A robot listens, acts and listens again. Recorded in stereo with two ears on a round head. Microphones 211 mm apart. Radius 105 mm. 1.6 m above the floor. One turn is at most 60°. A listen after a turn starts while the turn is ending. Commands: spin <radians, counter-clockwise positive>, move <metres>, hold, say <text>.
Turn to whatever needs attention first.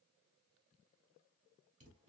hold
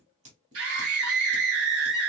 spin -1.05
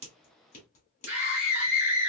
spin -0.96
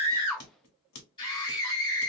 spin 0.35
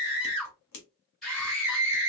say Found it: a scream, straight ahead.